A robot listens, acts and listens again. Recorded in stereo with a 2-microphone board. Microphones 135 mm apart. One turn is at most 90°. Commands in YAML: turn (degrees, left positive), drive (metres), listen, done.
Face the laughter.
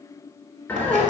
turn: 15
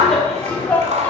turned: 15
turn: 30
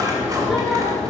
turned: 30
turn: 30
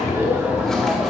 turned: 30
done: "Facing the laughter."